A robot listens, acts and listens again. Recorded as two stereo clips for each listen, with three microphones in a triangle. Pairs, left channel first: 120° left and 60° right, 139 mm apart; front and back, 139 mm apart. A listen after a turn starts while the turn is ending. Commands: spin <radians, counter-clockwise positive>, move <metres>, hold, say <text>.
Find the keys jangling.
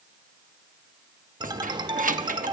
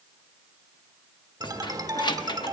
spin -0.96
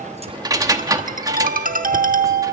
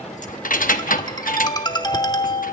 say Facing the keys jangling.